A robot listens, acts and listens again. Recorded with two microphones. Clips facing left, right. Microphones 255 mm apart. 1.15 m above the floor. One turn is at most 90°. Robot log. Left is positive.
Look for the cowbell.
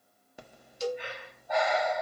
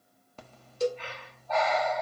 note: The cowbell: about 55° right or 125° right.
cmd yaw -55
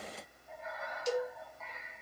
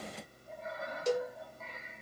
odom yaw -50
note: So it is at 65° right.
cmd yaw -65
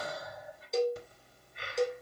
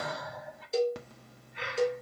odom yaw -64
end: Found it: a cowbell, straight ahead, 1 to 2 m away.